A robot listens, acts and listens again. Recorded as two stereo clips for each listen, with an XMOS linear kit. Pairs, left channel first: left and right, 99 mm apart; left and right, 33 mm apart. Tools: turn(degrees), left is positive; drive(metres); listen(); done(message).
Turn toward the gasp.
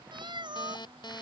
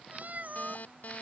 listen()
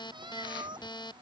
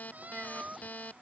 listen()
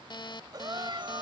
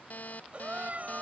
turn(degrees=-45)
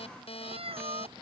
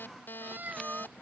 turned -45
listen()
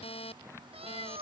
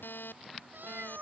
done("I heard a gasp, but can't make it out now. It was about straight ahead or 90° right.")